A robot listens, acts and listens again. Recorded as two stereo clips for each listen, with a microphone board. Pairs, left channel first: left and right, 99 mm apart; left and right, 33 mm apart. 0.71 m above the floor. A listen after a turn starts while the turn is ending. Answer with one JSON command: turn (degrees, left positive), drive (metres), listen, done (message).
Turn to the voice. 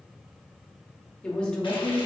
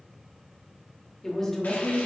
{"turn": 30}
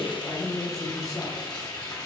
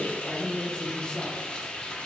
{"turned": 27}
{"turn": 140}
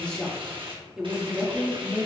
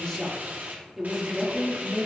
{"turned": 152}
{"turn": -10}
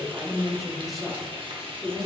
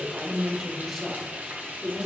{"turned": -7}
{"done": "Found it: a woman speaking, straight ahead, 1 to 2 m away."}